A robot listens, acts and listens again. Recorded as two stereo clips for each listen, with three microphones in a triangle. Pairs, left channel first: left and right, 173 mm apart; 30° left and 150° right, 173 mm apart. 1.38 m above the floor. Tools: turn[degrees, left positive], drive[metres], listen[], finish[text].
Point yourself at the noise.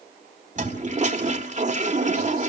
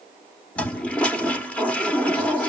Thought: The toilet flushing: 50° right.
Action: turn[-50]
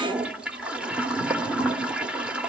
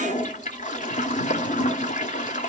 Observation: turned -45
Action: finish[Facing the toilet flushing, 1 to 2 m away.]